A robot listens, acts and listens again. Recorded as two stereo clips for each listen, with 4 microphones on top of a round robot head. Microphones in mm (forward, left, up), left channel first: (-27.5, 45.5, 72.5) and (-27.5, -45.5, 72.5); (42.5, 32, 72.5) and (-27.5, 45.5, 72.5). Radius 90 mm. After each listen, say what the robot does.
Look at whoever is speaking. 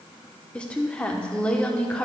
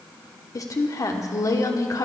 Turn 15° left.
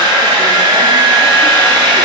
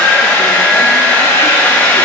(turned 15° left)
Keep listening.
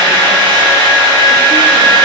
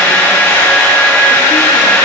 Keep listening.
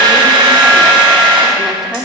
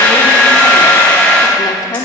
Found it: a woman speaking, straight ahead, 1 to 2 m away.